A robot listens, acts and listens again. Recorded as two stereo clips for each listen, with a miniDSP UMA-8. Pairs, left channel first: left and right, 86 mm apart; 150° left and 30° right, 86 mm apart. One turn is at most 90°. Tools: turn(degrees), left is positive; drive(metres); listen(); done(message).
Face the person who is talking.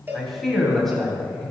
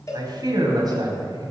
done("Found it: a man speaking, straight ahead, 2 to 4 m away.")